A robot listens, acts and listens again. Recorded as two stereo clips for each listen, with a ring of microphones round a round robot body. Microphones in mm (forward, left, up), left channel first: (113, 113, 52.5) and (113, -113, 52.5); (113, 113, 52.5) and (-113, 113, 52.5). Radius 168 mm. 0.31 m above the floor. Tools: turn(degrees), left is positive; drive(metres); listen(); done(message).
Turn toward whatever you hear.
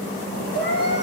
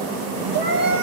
turn(degrees=140)
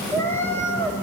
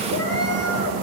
turn(degrees=10)
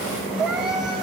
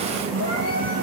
done("Facing the cat meowing.")